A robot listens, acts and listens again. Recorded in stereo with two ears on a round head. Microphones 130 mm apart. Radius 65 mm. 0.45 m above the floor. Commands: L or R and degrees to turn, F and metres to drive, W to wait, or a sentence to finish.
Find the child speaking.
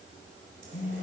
W
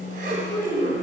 L20
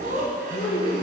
L30
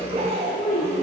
L125
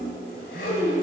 R15
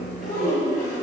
Facing the child speaking.